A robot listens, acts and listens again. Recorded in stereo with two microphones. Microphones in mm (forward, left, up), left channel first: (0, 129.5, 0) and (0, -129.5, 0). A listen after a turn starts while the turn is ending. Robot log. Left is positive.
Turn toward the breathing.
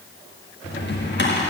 cmd idle
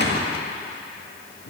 cmd idle
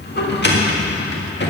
end: I can't make out breathing to turn to.